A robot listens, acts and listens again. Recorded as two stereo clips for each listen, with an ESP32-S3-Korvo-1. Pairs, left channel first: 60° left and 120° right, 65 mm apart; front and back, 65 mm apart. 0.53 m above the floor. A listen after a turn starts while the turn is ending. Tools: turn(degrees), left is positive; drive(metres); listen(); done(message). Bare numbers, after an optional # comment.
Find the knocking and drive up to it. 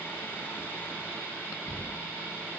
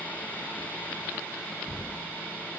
# The knocking: 90° left.
turn(90)
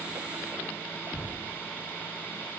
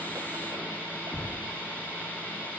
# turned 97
drive(1.0)
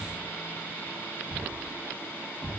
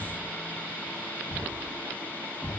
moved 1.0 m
drive(1.0)
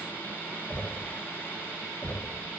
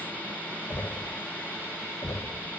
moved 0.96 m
drive(1.0)
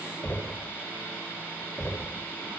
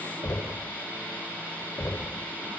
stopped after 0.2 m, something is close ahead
# The knocking is now 10° left.
turn(10)
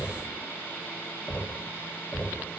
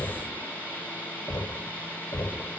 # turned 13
done("Arrived at the knocking, straight ahead.")